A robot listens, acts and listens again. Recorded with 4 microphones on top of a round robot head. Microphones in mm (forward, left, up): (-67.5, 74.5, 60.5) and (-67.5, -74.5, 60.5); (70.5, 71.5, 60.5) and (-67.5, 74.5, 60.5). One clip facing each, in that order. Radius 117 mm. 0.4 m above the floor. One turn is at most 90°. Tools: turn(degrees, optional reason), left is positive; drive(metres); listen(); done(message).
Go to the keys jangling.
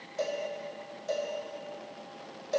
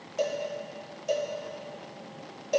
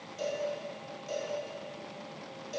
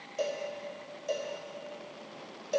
listen()
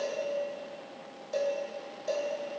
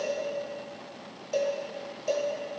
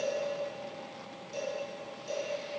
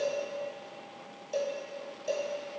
listen()
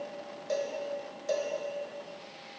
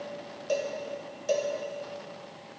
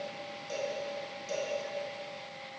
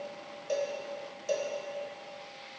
done("I can't make out keys jangling to turn to.")